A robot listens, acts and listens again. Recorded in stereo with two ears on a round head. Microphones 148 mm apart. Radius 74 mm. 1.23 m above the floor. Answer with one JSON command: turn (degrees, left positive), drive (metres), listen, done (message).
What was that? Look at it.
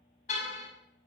{"turn": 45}
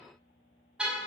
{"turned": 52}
{"done": "Found it: a car horn, straight ahead."}